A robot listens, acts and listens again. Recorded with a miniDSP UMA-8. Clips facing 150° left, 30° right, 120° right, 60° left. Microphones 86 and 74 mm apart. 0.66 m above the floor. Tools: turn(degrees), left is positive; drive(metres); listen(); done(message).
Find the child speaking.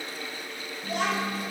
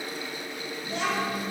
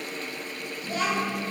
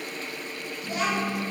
turn(degrees=130)
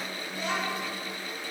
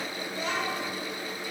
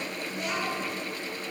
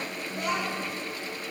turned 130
turn(degrees=25)
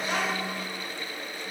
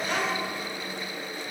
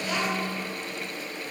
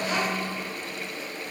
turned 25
done("Facing the child speaking, 2 to 4 m away.")